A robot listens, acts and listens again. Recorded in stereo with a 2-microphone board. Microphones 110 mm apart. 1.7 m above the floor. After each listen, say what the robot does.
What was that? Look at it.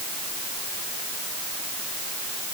Keep listening.
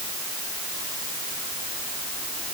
Keep listening.
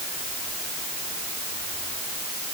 I can't make out anything.